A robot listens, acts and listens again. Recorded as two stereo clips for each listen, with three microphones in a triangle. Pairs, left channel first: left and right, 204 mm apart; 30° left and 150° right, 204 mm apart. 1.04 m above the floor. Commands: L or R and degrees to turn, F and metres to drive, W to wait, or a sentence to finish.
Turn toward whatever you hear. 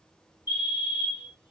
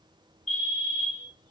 L80
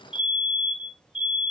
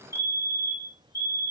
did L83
Facing the fire alarm, 2 to 4 m away.